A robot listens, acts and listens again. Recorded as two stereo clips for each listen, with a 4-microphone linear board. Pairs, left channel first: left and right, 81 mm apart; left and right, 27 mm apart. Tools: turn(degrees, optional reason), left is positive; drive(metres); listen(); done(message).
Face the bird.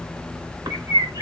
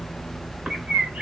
turn(degrees=-45, reason="The bird: about 45° right or 135° right.")
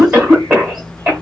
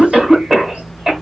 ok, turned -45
listen()
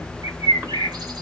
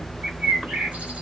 turn(degrees=-80, reason="So it is at 80° right.")
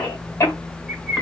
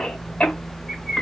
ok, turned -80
done("Found it: a bird, straight ahead, 1 to 2 m away.")